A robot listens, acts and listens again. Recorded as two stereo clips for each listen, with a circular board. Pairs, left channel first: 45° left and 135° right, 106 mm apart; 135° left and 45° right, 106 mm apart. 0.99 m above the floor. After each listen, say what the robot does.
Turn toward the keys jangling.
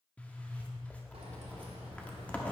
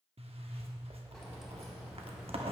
Turn 130° right.
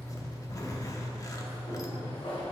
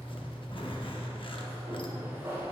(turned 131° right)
Turn 25° left.
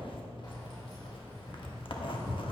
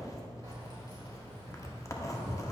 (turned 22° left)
Facing the keys jangling, 2 to 4 m away.